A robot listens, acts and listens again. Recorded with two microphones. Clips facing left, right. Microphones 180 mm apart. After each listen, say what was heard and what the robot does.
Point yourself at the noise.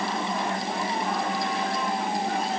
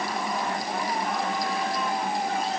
Keep listening.
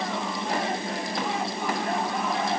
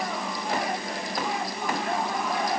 Keep listening.
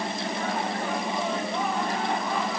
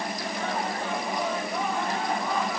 I can't make out anything to turn to.